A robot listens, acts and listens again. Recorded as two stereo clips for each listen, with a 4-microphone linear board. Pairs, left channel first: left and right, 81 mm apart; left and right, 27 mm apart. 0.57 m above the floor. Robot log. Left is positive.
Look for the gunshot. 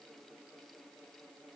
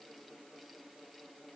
cmd idle
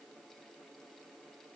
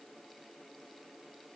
cmd idle
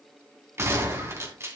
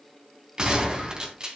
note: The gunshot: about 35° right or 145° right.
cmd yaw -35
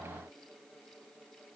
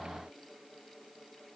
cmd idle
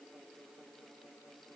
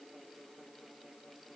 end: I heard a gunshot, but can't make it out now. It was about straight ahead or 110° right.